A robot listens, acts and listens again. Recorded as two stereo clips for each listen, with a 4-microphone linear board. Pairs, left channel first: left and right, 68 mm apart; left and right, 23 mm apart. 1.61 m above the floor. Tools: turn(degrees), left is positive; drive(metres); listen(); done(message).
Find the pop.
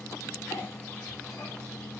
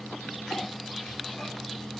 listen()
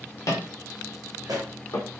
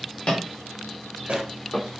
turn(degrees=-75)
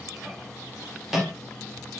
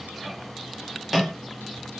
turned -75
listen()
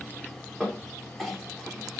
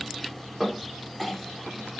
done("I heard a pop, but can't make it out now. It was about straight ahead or 30° right.")